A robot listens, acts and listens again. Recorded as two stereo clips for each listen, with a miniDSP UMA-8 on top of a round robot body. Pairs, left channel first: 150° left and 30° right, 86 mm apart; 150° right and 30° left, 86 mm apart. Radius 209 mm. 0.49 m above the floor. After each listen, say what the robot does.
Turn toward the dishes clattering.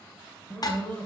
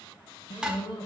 Turn 110° left.
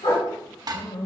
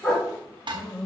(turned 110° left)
Turn 10° left.
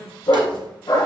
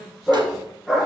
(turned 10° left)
Keep listening.
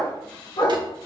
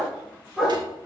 Keep listening.
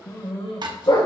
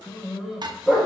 Facing the dishes clattering, 1 to 2 m away.